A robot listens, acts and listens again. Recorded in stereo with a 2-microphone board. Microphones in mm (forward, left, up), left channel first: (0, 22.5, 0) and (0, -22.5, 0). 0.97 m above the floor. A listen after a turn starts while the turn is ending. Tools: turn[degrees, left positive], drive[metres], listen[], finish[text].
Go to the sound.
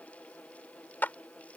Thought: The clap: about 40° left or 140° left.
Action: turn[40]
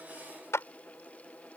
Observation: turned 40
Thought: So it is at 100° left.
Action: turn[100]
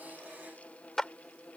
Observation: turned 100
Thought: The clap is now 10° left.
Action: turn[10]
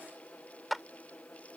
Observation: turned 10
Action: drive[1.0]
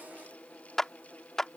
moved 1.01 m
Thought: The clap is now 10° left.
Action: turn[10]
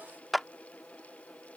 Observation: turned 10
Action: drive[1.0]
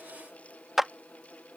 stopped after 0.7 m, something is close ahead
Action: finish[Arrived at the clap, straight ahead.]